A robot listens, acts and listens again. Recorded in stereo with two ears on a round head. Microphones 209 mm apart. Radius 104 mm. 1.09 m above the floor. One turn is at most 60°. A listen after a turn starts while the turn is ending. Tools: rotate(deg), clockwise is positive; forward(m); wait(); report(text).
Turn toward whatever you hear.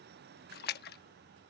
rotate(-40)
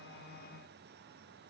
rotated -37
wait()
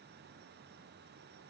report("I heard a splash, but can't make it out now. It was about 5° left or 100° left.")